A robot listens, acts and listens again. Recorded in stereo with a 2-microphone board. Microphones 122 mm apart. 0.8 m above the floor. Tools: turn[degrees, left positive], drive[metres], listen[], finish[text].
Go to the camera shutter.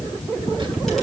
Action: listen[]
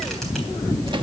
Action: listen[]
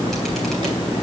Action: finish[I can't make out a camera shutter to turn to.]